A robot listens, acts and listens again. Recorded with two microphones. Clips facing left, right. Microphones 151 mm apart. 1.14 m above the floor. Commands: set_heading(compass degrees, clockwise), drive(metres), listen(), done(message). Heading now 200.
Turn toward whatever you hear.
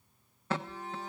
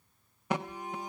set_heading(230)
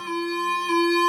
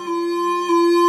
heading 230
set_heading(5)
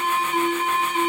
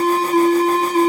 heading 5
set_heading(45)
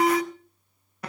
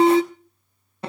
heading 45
set_heading(75)
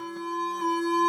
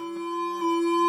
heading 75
done("Facing the alarm, under 1 m away.")